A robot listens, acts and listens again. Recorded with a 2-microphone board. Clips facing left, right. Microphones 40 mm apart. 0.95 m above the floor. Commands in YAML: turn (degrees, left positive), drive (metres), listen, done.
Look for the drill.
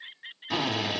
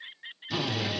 turn: 60
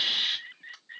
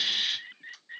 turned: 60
turn: 35
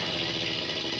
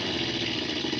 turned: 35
done: "Facing the drill, 1 to 2 m away."